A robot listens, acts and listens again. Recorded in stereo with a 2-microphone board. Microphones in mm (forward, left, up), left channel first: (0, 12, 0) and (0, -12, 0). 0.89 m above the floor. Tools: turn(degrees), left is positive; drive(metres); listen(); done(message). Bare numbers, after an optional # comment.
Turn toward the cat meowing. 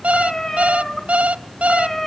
turn(30)
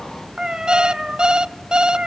# So it is at 45° right.
turn(-45)
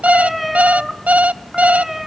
# The cat meowing is now 15° right.
turn(-15)
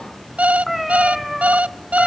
done("Found it: a cat meowing, straight ahead, 2 to 4 m away.")